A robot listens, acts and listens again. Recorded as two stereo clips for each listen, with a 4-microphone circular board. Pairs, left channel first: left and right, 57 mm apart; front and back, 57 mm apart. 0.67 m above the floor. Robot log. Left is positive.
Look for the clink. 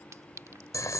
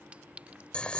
note: The clink: 115° right.
cmd yaw -115
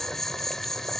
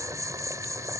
cmd idle
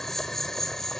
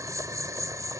cmd idle
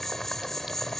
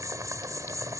end: Facing where the clink came from. I can't hear it now.